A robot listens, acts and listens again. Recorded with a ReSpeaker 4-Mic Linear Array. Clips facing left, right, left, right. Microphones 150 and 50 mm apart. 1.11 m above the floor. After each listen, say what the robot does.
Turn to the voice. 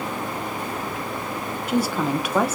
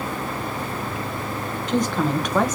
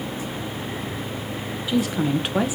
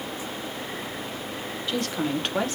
Turn 30° left.
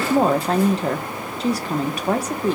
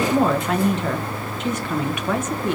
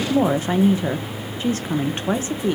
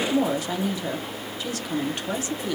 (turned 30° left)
Turn 140° left.
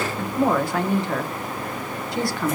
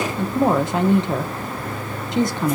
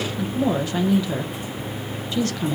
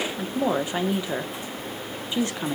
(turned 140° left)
Turn 25° right.
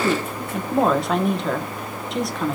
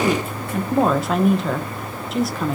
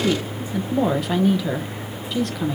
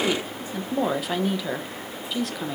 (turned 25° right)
Found it: a woman speaking, straight ahead, under 1 m away.